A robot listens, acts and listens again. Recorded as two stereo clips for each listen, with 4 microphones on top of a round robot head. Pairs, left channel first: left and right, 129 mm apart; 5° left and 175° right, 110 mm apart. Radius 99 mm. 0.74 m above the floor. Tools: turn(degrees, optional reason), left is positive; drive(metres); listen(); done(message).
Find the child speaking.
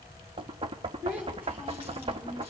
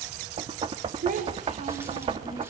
turn(degrees=-170, reason="The child speaking: 170° right.")
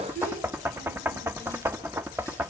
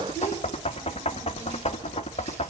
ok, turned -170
turn(degrees=-60, reason="The child speaking is now 60° right.")
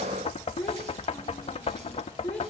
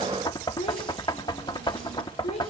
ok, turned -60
turn(degrees=10, reason="The child speaking is now 10° left.")
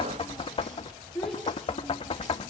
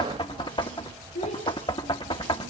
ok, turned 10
done("Found it: a child speaking, straight ahead, over 4 m away.")